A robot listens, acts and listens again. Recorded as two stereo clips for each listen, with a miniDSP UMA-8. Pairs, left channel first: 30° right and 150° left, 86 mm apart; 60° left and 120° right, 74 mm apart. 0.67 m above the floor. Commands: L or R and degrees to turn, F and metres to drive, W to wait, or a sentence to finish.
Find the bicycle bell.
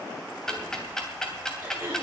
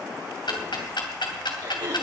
W
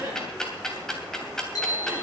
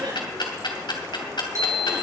R75
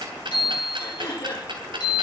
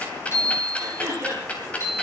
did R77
Facing the bicycle bell.